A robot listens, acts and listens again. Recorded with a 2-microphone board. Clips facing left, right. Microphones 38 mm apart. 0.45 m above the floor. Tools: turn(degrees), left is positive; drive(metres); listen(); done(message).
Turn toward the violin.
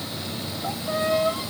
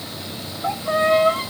turn(degrees=-45)
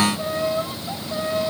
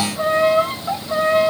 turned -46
turn(degrees=-85)
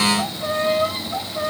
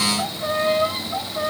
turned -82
done("Found it: a violin, straight ahead.")